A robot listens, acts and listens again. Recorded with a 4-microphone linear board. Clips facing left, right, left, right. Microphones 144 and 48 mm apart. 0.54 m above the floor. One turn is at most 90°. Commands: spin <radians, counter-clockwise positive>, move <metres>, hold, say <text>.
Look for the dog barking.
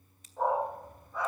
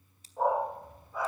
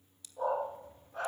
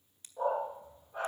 spin -0.52
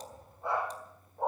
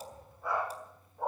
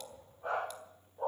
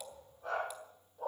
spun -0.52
spin 0.44
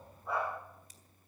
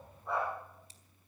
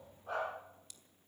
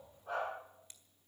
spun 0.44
say Facing the dog barking, over 4 m away.